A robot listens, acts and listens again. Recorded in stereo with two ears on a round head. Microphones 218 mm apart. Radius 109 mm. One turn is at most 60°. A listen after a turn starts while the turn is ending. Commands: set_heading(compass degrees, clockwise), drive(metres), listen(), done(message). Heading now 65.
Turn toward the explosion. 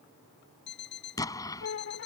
set_heading(35)
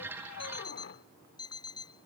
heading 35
listen()
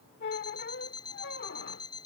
done("I heard an explosion, but can't make it out now. It was about 15° right or 135° left.")